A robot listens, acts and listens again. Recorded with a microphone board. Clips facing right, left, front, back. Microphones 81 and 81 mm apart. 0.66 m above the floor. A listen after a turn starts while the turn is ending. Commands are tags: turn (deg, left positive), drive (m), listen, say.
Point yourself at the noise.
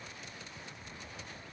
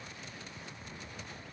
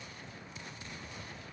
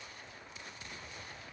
<listen/>
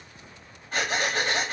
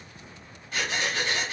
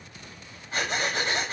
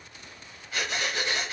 <turn deg="-55"/>
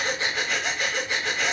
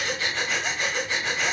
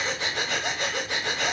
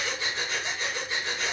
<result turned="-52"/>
<say>Facing the breathing.</say>